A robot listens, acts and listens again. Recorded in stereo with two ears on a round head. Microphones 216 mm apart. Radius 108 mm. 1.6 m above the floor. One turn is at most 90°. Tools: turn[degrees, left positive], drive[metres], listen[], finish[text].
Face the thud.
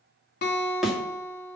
Action: turn[30]
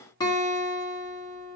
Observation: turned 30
Action: listen[]
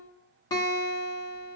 Action: finish[I heard a thud, but can't make it out now. It was about 30° right or 150° left.]